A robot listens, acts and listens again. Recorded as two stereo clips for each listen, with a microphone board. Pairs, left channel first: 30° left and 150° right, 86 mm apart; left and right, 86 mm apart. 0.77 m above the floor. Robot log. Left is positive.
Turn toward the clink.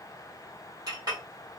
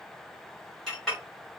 note: The clink: 175° left.
cmd yaw +175
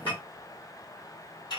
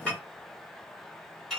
end: Facing the clink.